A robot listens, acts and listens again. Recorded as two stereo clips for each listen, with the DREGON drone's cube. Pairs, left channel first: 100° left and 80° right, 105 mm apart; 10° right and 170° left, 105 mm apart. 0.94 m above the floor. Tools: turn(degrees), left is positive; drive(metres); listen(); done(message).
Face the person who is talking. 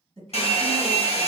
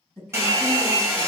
turn(degrees=-85)
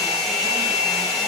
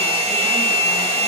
listen()
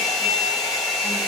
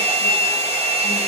listen()
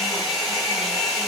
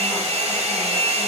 done("I heard a woman speaking from this way, but can't make it out now.")